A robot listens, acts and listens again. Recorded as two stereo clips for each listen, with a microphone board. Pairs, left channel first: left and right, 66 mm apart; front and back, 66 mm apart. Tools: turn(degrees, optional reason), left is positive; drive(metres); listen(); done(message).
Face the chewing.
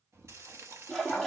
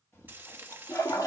turn(degrees=-50, reason="The chewing: 50° right.")
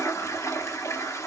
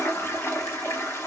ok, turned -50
listen()
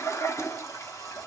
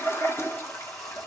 listen()
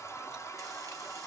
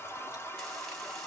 done("Facing where the chewing came from. I can't hear it now.")